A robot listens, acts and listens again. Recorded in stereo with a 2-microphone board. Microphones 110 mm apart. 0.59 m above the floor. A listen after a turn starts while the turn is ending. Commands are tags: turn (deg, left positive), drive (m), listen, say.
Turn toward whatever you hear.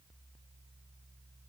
<listen/>
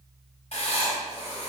<turn deg="90"/>
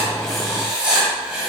<turn deg="-10"/>
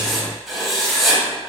<say>Found it: writing, straight ahead, 1 to 2 m away.</say>